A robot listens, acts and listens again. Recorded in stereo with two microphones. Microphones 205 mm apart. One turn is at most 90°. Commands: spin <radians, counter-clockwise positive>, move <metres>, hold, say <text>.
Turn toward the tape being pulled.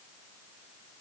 hold
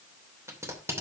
spin -0.52
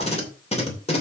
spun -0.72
spin 0.52
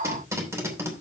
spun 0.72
spin -0.26
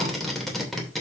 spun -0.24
say Found it: tape being pulled, straight ahead, 2 to 4 m away.